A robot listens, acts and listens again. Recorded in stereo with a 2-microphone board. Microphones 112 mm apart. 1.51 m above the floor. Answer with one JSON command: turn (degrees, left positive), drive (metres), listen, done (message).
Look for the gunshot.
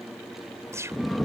{"turn": -25}
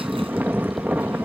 {"listen": true}
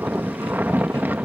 {"done": "I heard a gunshot, but can't make it out now. It was about straight ahead or 130° right."}